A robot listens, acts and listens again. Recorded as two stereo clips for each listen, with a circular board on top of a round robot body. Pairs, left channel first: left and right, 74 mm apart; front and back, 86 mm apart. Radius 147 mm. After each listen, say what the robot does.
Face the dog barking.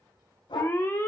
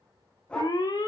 Turn 75° left.
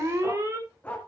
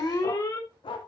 Turn 20° left.
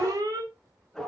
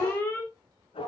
Facing the dog barking, 2 to 4 m away.